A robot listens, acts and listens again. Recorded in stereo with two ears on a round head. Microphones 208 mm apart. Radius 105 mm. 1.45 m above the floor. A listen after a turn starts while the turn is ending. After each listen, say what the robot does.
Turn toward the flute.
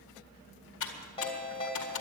Keep listening.
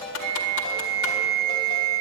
Turn 45° right.
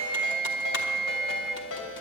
Found it: a flute, straight ahead.